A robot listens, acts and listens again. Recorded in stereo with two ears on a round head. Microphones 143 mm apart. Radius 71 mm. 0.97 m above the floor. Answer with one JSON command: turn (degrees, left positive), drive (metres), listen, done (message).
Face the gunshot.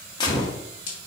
{"turn": 30}
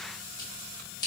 {"listen": true}
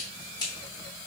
{"done": "I heard a gunshot, but can't make it out now. It was about straight ahead or 120° left."}